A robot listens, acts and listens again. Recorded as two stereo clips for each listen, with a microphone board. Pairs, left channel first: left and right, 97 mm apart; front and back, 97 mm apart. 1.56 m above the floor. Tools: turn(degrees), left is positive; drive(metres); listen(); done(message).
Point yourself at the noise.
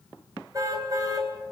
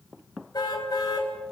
turn(degrees=-40)
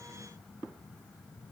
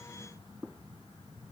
listen()
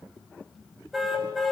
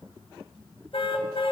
done("Found it: a car horn, straight ahead.")